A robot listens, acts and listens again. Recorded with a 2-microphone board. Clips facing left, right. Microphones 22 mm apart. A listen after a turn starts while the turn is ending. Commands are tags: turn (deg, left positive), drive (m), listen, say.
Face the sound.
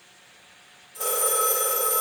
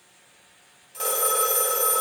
<turn deg="-90"/>
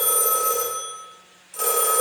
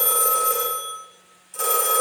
<turn deg="10"/>
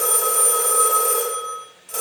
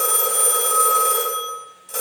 <say>Facing the phone ringing, 2 to 4 m away.</say>